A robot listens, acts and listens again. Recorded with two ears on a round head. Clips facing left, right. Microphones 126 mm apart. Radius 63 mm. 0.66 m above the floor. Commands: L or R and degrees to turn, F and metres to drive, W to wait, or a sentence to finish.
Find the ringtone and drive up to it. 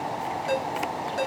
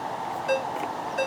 L45
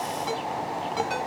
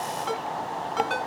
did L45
F1.0
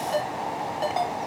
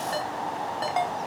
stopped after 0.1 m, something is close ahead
Blocked. The ringtone is further on, straight ahead.